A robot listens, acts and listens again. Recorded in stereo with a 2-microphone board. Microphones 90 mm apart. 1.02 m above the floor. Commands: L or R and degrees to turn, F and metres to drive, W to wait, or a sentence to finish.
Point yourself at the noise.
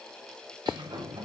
R50
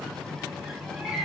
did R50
Found it: a sliding door, straight ahead.